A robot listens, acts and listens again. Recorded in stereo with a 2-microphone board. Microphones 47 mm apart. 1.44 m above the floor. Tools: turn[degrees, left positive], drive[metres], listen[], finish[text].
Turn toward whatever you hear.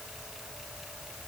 Action: listen[]
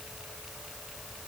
Action: listen[]
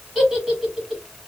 Action: turn[-30]
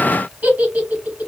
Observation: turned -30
Thought: So it is at 145° right.
Action: turn[-145]
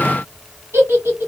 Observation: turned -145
Thought: The giggle is now 65° right.
Action: turn[-65]
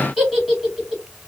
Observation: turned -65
Action: finish[Found it: a giggle, straight ahead.]